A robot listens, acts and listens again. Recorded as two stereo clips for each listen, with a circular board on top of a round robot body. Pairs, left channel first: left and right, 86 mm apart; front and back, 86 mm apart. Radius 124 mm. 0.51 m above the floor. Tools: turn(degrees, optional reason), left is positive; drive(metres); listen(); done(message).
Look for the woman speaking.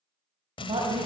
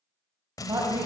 turn(degrees=-120, reason="The woman speaking: 120° right.")
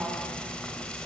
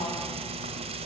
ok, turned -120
listen()
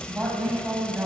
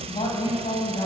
turn(degrees=-20, reason="The woman speaking is now 20° right.")
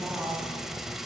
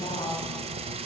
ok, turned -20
done("Facing the woman speaking.")